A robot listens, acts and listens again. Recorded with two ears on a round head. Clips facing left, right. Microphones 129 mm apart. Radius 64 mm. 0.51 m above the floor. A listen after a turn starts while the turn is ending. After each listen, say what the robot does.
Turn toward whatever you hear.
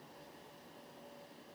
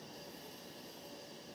Keep listening.
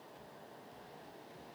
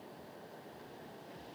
Keep listening.
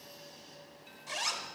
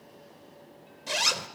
Turn 75° right.
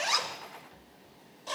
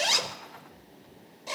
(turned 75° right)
Turn 10° right.
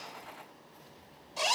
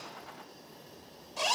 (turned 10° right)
Found it: a zipper, straight ahead.